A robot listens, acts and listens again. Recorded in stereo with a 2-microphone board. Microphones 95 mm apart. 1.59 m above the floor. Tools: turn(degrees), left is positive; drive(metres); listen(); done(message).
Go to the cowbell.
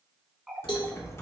turn(degrees=55)
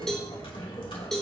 drive(metres=1.0)
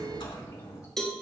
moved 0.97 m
drive(metres=1.0)
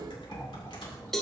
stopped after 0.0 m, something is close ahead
done("I am next to the cowbell.")